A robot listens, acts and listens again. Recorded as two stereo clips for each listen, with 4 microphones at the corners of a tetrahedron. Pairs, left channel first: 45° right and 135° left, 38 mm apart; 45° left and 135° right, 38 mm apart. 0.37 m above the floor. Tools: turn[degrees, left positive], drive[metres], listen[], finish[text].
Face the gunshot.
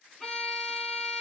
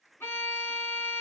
Action: listen[]
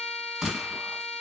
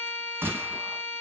Thought: The gunshot: 150° right.
Action: turn[-150]
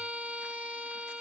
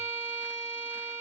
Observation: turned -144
Action: finish[Facing where the gunshot came from. I can't hear it now.]